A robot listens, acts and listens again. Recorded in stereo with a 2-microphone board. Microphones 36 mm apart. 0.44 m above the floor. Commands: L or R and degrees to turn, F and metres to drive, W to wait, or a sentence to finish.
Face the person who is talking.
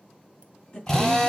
L45
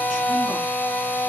W
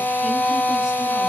W
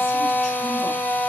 I heard a woman speaking, but can't make it out now. It was about straight ahead or 90° left.